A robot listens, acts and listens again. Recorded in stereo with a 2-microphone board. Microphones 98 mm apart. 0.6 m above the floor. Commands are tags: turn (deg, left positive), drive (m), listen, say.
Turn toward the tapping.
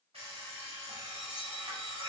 <listen/>
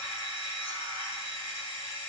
<listen/>
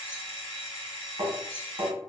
<turn deg="-55"/>
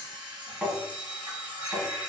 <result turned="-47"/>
<say>Facing the tapping, 1 to 2 m away.</say>